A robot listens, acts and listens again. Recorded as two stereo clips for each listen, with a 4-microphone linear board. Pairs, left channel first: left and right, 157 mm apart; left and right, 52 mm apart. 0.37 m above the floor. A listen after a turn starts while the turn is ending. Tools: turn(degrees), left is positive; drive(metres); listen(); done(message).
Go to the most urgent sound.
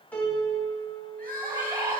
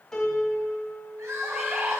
turn(degrees=-90)
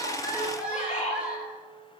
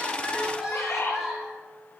drive(metres=1.0)
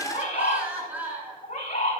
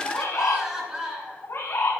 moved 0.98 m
turn(degrees=-10)
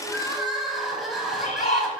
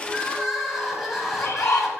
drive(metres=1.0)
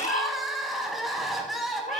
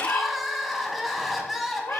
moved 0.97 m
drive(metres=1.0)
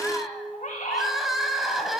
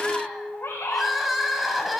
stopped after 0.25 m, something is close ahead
done("Arrived at the crying, straight ahead.")